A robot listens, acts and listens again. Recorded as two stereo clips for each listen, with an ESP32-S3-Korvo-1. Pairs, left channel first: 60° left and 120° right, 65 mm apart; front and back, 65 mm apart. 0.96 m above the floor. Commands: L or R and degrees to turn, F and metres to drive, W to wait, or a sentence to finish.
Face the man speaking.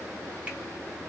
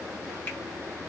W
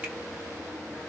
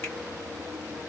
W
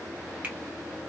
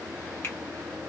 I can't make out a man speaking to turn to.